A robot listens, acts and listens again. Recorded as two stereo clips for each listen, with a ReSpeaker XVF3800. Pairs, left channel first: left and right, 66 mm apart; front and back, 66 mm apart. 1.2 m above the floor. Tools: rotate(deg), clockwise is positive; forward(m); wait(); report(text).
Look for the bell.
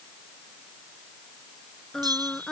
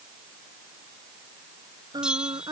rotate(100)
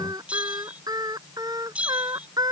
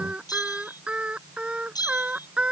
rotate(20)
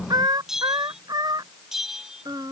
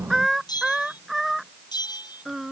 report("Facing the bell.")